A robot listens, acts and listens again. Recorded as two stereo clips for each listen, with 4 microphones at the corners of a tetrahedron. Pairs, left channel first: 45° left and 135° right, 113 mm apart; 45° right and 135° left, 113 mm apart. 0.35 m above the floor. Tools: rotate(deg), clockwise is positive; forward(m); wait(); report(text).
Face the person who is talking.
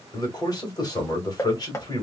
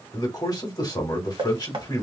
report("Facing the man speaking.")